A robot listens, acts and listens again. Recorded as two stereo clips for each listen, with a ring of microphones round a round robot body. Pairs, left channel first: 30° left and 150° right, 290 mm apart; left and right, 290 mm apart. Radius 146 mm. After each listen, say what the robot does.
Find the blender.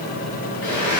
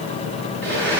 Facing the blender.